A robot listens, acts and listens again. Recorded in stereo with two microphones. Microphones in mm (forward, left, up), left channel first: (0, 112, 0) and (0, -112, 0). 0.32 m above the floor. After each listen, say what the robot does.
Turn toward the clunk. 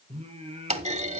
Turn 30° right.
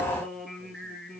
Keep listening.
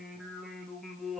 I heard a clunk, but can't make it out now. It was about straight ahead or 120° right.